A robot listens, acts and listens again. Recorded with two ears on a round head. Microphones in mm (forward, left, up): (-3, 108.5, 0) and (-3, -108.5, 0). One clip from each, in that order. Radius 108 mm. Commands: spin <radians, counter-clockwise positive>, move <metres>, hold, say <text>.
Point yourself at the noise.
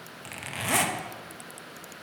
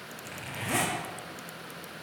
spin 0.61
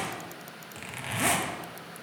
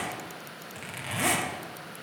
say Facing the zipper.